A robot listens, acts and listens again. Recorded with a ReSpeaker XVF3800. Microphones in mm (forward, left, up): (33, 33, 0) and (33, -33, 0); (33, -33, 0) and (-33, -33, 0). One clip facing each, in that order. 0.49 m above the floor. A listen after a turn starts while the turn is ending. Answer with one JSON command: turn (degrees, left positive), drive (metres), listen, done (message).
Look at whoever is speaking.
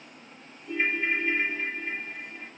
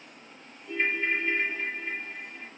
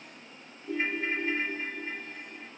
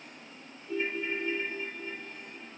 {"listen": true}
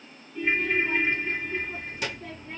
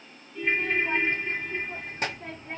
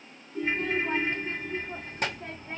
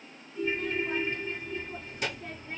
{"turn": -40}
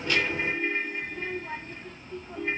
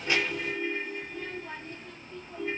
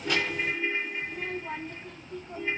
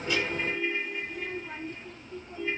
{"turn": 15}
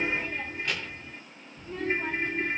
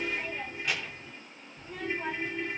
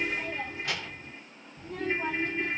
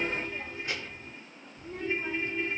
{"done": "Facing the child speaking."}